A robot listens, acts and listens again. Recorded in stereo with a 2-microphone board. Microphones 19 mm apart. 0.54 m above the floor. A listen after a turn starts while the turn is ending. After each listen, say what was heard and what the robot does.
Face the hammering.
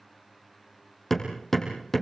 Turn 30° left.
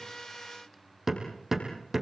So it is at 20° right. Turn 20° right.
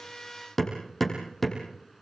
Facing the hammering.